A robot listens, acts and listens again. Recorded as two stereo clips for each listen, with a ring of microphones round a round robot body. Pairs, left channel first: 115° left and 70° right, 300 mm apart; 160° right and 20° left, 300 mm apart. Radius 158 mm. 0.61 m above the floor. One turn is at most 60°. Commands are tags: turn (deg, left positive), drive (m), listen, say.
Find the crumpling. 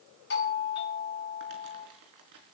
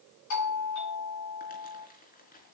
<turn deg="-60"/>
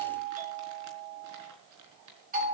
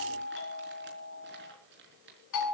<turn deg="-35"/>
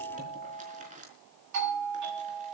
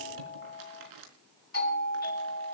<say>Facing the crumpling.</say>